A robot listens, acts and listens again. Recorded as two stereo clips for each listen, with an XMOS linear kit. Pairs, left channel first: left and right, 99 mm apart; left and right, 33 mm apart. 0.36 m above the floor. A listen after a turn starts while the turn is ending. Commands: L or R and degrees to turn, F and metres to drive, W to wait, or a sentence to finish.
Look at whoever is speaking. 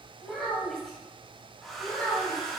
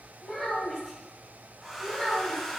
L20
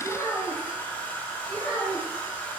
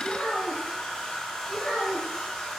L35
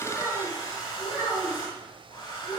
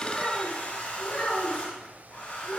L30
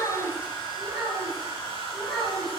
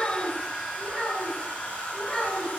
Facing the child speaking.